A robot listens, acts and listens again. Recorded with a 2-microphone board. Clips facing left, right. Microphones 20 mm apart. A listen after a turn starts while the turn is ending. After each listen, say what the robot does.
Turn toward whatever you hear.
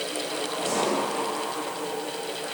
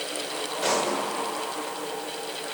Turn 65° right.
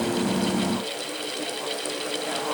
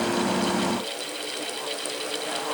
Keep listening.
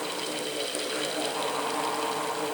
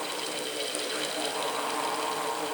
I heard a pop, but can't make it out now. It was about straight ahead or 50° right.